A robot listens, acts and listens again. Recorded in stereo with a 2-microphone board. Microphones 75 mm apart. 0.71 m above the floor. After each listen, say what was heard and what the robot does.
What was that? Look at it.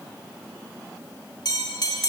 The bell: about 65° left or 115° left. Turn 65° left.
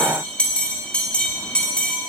So it is at 15° left. Turn 15° left.
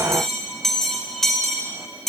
Found it: a bell, straight ahead.